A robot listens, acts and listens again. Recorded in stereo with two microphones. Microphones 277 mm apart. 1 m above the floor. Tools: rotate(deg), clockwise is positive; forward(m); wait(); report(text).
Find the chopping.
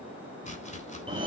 rotate(-25)
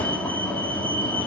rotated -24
wait()
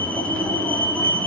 wait()
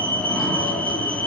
report("I heard chopping, but can't make it out now. It was about straight ahead or 130° left.")